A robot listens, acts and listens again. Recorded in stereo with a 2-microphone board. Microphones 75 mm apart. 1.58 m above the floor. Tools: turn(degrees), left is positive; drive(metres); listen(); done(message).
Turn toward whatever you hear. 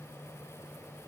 listen()
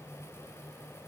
listen()
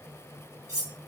turn(degrees=-35)
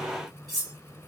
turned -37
done("Facing the cutlery clinking, 2 to 4 m away.")